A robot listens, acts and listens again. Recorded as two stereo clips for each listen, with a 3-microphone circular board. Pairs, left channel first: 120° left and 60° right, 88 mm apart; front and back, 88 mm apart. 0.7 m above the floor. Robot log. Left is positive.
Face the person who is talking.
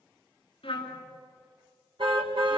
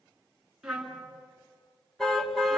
cmd idle
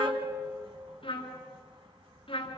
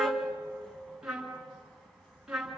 cmd idle
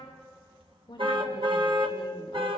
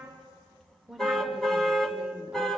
note: The woman speaking: 95° left.
cmd yaw +95
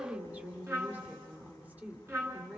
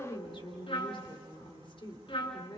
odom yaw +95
note: The woman speaking is now 10° left.
cmd yaw +10
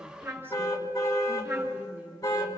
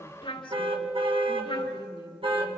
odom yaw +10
end: Found it: a woman speaking, straight ahead.